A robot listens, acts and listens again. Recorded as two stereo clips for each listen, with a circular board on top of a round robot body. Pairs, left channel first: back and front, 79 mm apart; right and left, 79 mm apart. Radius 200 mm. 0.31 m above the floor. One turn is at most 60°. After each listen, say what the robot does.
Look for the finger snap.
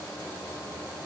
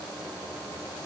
Keep listening.
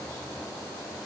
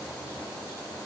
Keep listening.
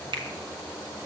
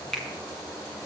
Facing the finger snap.